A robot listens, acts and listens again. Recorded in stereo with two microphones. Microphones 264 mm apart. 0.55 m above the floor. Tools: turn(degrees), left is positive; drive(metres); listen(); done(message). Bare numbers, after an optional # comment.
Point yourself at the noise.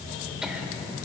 turn(-30)
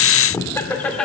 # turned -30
turn(30)
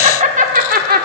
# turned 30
# So it is at 35° right.
turn(-35)
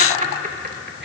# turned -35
# The laughter is now 30° right.
turn(-30)
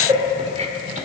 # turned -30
# The laughter is now 30° right.
turn(-30)
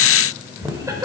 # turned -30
# The laughter is now 10° right.
turn(-10)
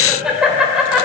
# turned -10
done("Facing the laughter.")